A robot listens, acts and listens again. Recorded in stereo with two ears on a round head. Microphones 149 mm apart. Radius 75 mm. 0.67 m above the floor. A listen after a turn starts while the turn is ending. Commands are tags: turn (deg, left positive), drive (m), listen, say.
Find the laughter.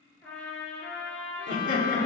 <turn deg="50"/>
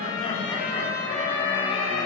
<turn deg="30"/>
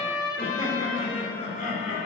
<turn deg="45"/>
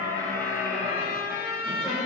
<turn deg="-10"/>
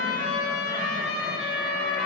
<listen/>
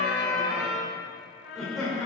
<say>Facing the laughter.</say>